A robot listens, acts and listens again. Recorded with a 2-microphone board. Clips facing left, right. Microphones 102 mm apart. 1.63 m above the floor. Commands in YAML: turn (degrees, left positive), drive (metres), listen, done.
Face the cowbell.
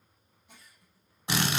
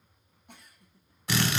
listen: true
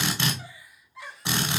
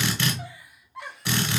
listen: true
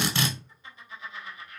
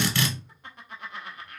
done: "I can't make out a cowbell to turn to."